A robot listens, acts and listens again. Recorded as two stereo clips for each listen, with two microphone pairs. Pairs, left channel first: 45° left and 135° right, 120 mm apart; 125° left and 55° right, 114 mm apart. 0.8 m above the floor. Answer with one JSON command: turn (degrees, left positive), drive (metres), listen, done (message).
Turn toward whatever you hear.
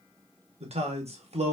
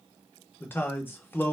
{"turn": -165}
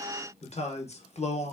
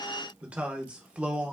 {"turn": 25}
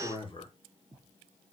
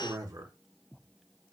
{"done": "Facing the man speaking, under 1 m away."}